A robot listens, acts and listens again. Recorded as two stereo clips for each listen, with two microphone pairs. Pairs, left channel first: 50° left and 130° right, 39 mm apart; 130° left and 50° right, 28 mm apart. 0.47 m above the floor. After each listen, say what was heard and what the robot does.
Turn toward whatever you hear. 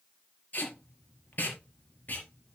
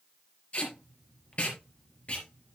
The tape being pulled: 90° left. Turn 90° left.
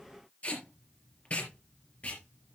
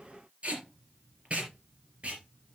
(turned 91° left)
Found it: tape being pulled, straight ahead, over 4 m away.